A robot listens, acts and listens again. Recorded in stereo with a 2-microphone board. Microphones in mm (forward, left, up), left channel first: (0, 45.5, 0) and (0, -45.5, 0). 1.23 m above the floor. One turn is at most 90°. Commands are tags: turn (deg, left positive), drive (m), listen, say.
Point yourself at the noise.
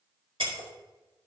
<turn deg="-90"/>
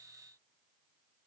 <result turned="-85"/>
<say>Facing where the breaking glass came from. I can't hear it now.</say>